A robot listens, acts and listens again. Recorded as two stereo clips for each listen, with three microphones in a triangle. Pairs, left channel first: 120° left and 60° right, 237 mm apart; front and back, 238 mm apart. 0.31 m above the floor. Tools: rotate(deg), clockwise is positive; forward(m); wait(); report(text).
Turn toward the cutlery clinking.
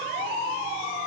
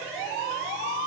wait()
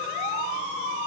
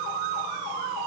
wait()
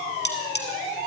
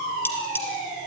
rotate(-80)
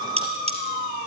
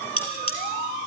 report("Found it: cutlery clinking, straight ahead.")